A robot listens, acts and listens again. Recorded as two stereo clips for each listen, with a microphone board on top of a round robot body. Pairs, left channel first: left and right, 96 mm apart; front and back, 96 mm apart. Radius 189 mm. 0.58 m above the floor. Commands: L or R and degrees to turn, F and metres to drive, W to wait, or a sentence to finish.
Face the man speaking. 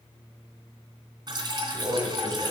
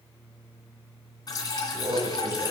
R150
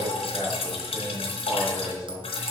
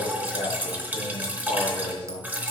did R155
R10
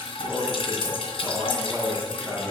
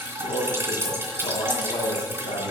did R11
Facing the man speaking.